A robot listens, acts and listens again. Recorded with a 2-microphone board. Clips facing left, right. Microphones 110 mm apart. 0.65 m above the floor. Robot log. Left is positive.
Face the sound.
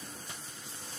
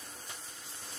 cmd idle
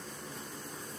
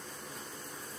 cmd idle
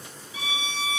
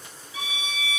note: The violin: about 30° left or 150° left.
cmd yaw +30
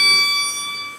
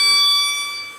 note: So it is at 120° left.
cmd yaw +120
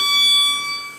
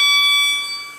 end: Found it: a violin, straight ahead, 1 to 2 m away.